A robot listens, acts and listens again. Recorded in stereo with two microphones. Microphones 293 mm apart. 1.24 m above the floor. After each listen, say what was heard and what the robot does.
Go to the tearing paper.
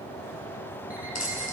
The tearing paper: about 65° left or 115° left. Turn 65° left.
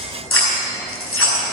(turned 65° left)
So it is at 45° left. Turn 45° left.
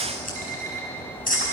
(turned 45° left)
The tearing paper is now 30° left. Turn 30° left.
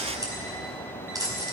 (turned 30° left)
The tearing paper is now 15° right. Turn 15° right.
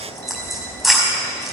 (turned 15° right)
Drive 1.0 m forward.
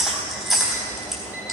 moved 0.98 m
Drive 1.0 m forward.
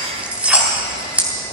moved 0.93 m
Drive 1.0 m forward.
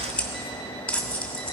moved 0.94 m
Drive 1.0 m forward.
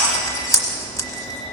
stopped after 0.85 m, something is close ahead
The tearing paper is now 10° left. Turn 10° left.
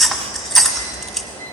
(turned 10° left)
Arrived at the tearing paper, straight ahead.